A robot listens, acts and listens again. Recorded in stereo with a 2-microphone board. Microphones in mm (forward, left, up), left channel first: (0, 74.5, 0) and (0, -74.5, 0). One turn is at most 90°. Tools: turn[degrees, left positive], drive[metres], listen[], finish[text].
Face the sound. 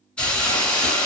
Action: turn[30]
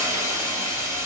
Thought: So it is at 20° right.
Action: turn[-20]
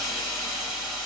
Action: finish[Facing the hiss, 1 to 2 m away.]